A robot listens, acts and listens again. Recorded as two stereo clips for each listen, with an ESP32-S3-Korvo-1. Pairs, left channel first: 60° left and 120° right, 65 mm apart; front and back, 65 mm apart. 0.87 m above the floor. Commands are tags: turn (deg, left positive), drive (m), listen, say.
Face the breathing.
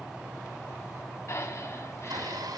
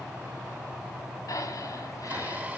<turn deg="20"/>
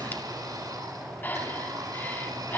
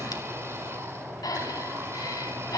<say>Facing the breathing.</say>